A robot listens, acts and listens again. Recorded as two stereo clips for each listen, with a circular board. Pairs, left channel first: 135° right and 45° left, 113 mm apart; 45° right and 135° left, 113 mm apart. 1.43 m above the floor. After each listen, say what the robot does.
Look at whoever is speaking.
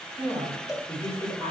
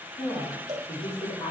Turn 90° right.
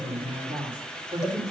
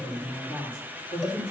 Turn 10° right.
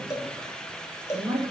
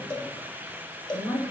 Turn 10° right.
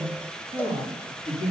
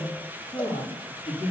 Turn 10° right.
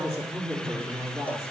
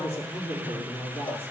Turn 10° right.
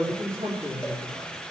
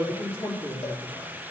Found it: a woman speaking, straight ahead, 2 to 4 m away.